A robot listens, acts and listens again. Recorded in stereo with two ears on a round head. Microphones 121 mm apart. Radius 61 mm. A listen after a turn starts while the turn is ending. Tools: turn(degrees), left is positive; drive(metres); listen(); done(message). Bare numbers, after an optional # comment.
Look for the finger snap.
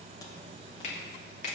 # The finger snap: about 50° left or 130° left.
turn(50)
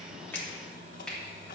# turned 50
done("Facing the finger snap.")